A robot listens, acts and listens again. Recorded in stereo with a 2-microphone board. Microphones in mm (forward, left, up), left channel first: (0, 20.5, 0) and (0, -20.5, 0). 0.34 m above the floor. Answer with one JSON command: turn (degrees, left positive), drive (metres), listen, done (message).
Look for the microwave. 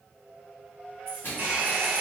{"turn": 60}
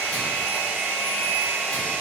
{"listen": true}
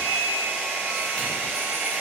{"listen": true}
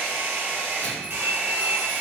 {"done": "I heard a microwave, but can't make it out now. It was about straight ahead or 60° left."}